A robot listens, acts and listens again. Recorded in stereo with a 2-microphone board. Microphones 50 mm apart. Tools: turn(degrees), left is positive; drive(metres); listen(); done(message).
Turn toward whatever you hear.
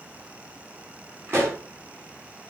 turn(degrees=-50)
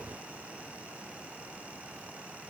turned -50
listen()
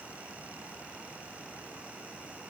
done("I heard a pop, but can't make it out now. It was about straight ahead or 80° right.")